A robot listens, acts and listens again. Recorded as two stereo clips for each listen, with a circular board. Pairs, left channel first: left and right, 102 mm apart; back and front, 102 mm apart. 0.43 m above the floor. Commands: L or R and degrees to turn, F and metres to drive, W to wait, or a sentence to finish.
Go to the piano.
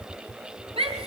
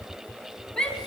W
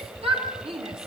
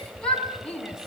W
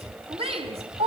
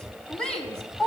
I can't make out a piano, only a shout.